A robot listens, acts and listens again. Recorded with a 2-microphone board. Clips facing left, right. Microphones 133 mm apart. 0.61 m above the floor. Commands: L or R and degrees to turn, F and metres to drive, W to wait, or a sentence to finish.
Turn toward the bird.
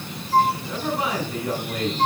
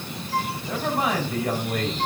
W
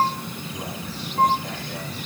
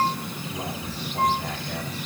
W
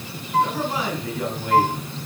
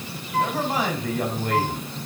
I can't make out a bird to turn to.